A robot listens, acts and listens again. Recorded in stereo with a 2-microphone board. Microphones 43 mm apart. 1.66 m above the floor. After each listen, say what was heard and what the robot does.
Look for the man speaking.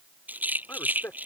The man speaking: about 55° left or 125° left. Turn 55° left.
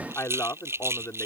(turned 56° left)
So it is at 65° left. Turn 65° left.
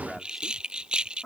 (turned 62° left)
Found it: a man speaking, straight ahead.